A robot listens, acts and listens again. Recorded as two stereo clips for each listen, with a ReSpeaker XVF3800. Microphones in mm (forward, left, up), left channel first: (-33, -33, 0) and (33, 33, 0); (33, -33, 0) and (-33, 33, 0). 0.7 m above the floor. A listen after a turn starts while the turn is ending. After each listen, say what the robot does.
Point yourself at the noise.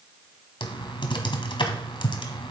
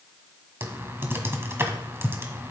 Turn 160° right.
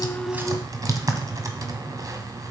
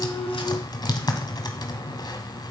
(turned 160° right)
Found it: typing on a keyboard, straight ahead, 1 to 2 m away.